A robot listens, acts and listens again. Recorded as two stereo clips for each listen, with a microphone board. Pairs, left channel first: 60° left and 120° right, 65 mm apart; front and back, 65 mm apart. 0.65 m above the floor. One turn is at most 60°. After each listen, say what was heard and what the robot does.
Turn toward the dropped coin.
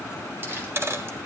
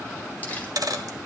The dropped coin: 165° right. Turn 60° right.
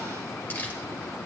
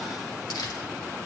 Nothing new. It was at 105° right. Turn 60° right.
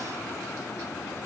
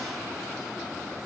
Nothing new. It was at 45° right. Turn 45° right.
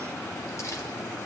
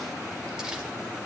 I heard a dropped coin from this way, but can't make it out now.